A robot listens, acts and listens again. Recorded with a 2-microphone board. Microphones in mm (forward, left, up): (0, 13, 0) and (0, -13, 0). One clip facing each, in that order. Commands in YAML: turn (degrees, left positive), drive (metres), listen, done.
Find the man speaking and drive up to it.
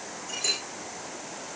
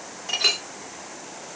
listen: true
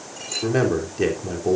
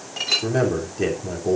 turn: 15
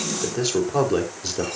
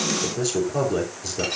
turn: 150
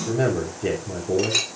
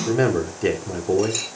turn: -45
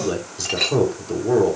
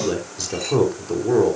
drive: 1.0
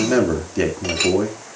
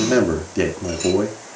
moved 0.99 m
drive: 1.0
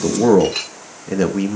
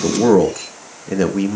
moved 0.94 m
drive: 1.0
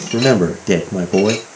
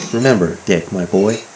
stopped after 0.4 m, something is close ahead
turn: -10
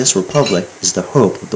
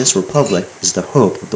done: "Arrived at the man speaking, straight ahead."